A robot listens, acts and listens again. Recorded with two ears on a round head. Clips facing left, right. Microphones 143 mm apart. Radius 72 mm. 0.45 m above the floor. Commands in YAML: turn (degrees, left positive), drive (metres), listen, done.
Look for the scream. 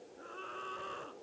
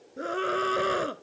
turn: -90
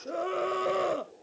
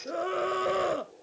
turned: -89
done: "Facing the scream."